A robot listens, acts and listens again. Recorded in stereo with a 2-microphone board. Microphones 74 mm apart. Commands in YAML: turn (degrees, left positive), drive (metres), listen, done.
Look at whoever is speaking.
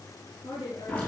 turn: 90
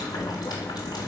listen: true
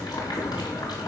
listen: true
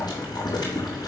done: "Facing where the woman speaking came from. I can't hear it now."